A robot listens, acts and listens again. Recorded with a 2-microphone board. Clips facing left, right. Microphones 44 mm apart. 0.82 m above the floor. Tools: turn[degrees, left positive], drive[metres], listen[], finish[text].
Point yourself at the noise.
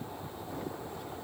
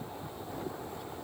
Action: listen[]
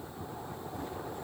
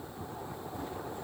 Action: listen[]
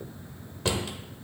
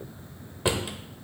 Thought: The drawer: about 15° right or 165° right.
Action: turn[-15]
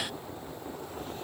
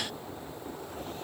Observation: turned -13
Action: listen[]
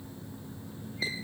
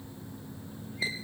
Action: listen[]
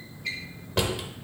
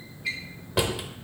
Action: finish[Facing the drawer.]